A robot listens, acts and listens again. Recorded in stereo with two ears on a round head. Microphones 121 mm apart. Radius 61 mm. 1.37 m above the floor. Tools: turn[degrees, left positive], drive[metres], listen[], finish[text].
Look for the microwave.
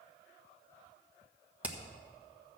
Action: listen[]
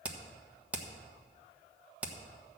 Action: listen[]
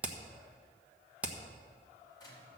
Thought: The microwave: about 30° left or 150° left.
Action: turn[30]
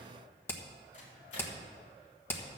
Thought: So it is at 120° left.
Action: turn[120]
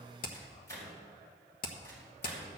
Thought: The microwave is now 20° left.
Action: turn[20]
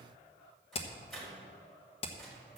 Action: finish[Found it: a microwave, straight ahead, over 4 m away.]